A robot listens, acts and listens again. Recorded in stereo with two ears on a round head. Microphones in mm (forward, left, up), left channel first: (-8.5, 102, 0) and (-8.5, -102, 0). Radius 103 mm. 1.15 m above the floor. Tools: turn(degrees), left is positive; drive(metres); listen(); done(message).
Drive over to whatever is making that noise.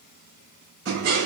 turn(degrees=-60)
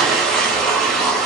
drive(metres=1.0)
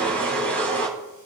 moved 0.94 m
turn(degrees=10)
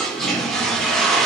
drive(metres=1.0)
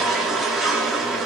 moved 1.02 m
drive(metres=1.0)
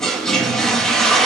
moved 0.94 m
drive(metres=1.0)
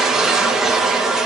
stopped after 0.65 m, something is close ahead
done("Arrived at the toilet flushing, straight ahead.")